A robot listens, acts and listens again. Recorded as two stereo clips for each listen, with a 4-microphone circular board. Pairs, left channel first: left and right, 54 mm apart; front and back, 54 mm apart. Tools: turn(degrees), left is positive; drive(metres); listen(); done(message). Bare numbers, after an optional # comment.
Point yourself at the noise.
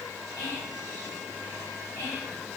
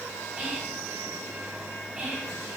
# The whispering: 105° left.
turn(105)
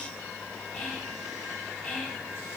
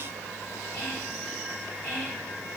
# The whispering is now 15° left.
turn(15)
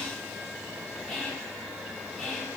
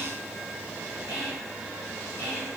done("Facing the whispering.")